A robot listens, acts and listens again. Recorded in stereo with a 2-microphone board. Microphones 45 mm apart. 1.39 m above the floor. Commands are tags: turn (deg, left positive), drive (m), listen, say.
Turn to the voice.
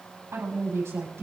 <turn deg="-90"/>
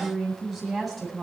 <say>Facing the woman speaking.</say>